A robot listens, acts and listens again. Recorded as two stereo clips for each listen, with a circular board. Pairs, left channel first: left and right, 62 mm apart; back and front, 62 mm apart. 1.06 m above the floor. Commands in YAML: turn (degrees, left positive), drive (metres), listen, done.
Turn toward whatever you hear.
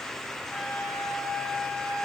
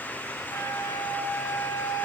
turn: 165
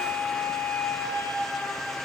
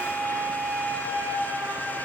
turn: 50
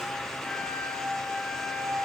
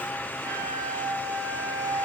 turn: 20
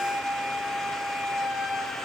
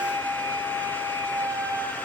done: "Found it: a flute, straight ahead."